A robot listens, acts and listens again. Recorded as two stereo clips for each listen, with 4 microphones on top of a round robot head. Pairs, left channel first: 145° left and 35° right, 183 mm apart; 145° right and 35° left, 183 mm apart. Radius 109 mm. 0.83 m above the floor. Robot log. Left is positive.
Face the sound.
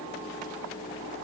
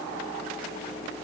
cmd idle
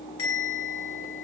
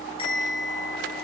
note: The bell: 150° left.
cmd yaw +150
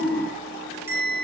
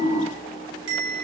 note: The bell is now 45° left.
cmd yaw +45
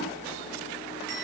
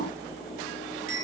end: Found it: a bell, straight ahead, over 4 m away.